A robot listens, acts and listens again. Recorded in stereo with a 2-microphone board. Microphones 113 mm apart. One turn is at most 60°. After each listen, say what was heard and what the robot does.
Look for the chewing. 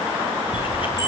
The chewing: about 50° left or 130° left. Turn 50° left.
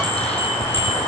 So it is at 75° left. Turn 60° left.
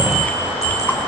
The chewing is now 15° left. Turn 15° left.
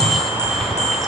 Found it: chewing, straight ahead.